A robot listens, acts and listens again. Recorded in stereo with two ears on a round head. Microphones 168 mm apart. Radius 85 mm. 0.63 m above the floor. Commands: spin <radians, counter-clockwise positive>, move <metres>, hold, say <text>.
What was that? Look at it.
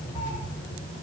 spin 0.52
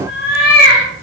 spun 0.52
spin 2.27
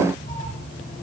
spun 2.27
spin 0.52
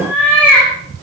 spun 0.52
spin 0.17
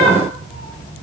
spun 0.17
hold
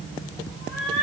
say Found it: a cat meowing, straight ahead, over 4 m away.